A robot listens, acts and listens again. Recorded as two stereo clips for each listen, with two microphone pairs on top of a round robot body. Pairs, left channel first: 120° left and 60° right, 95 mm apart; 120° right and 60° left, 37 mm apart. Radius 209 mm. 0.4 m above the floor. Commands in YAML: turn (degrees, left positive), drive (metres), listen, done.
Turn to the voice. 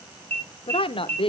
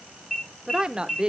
turn: 120
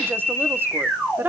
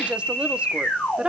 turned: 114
turn: 10
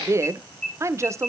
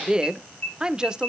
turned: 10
done: "Found it: a woman speaking, straight ahead, 1 to 2 m away."